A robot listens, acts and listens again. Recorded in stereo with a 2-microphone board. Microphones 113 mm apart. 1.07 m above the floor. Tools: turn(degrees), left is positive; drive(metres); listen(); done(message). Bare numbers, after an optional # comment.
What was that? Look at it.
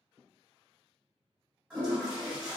turn(-30)
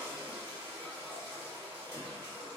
# So it is at 135° right.
turn(-135)
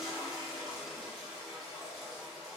done("Facing the toilet flushing, 1 to 2 m away.")